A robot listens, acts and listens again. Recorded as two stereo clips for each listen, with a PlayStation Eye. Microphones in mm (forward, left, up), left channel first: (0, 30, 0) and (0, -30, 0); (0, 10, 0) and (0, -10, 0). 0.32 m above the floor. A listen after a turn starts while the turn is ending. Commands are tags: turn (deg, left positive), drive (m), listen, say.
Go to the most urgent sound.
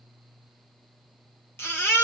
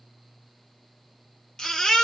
<turn deg="40"/>
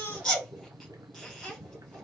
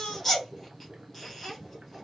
<drive m="1.0"/>
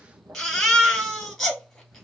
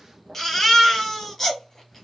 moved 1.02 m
<drive m="1.0"/>
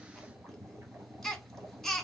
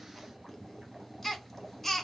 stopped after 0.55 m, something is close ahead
<say>I am next to the baby crying.</say>